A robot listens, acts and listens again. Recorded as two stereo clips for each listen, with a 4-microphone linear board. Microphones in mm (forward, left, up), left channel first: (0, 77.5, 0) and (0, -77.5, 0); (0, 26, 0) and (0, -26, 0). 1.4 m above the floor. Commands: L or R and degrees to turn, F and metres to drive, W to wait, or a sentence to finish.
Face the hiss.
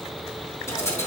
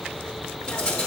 L20
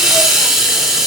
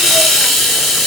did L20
Facing the hiss.